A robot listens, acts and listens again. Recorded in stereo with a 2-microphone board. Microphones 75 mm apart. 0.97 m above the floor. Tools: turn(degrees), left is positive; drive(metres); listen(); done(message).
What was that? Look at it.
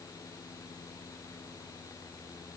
listen()
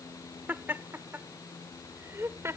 turn(degrees=-35)
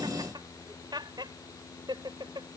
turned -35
turn(degrees=-100)
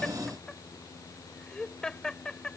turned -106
turn(degrees=10)
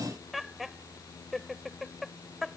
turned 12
done("Found it: laughter, straight ahead.")